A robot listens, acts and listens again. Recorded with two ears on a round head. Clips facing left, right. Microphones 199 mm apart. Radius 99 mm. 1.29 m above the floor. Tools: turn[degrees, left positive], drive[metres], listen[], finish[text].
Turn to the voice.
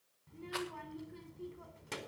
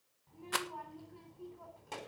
Thought: The child speaking: about 20° left or 160° left.
Action: turn[20]
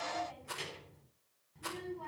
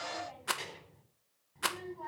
Action: finish[Facing the child speaking, 2 to 4 m away.]